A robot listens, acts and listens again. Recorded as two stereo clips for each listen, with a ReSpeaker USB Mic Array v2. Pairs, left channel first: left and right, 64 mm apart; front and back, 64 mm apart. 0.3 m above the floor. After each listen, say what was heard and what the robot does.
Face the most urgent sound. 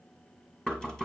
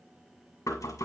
Keep listening.
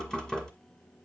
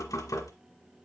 Keep listening.
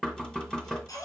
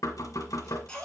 The baby crying: 80° left. Turn 80° left.
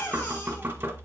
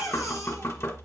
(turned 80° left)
The baby crying is now 30° left. Turn 30° left.
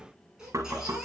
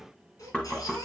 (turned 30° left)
The baby crying is now 10° right. Turn 10° right.
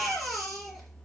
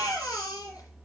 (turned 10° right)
Found it: a baby crying, straight ahead, 2 to 4 m away.